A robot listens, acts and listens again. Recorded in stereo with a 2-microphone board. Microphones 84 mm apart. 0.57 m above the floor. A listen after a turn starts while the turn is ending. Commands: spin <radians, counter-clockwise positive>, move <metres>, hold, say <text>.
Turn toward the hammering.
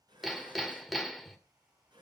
spin -0.52
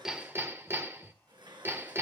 spin -2.44
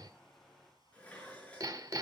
spin -0.96
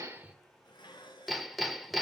say Facing the hammering.